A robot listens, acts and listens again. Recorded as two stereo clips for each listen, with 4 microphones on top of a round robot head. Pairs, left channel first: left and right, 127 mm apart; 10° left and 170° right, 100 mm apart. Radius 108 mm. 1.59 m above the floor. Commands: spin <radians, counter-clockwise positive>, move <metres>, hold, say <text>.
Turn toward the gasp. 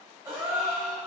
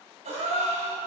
spin -2.79
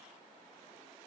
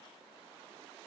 say Facing where the gasp came from. I can't hear it now.